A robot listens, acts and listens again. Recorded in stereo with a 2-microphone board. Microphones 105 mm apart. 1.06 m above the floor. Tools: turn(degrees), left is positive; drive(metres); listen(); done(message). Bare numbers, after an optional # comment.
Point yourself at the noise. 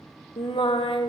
# The singing: about 55° left or 125° left.
turn(55)
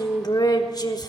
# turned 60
# So it is at 45° left.
turn(45)
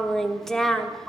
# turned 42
done("Facing the singing, 1 to 2 m away.")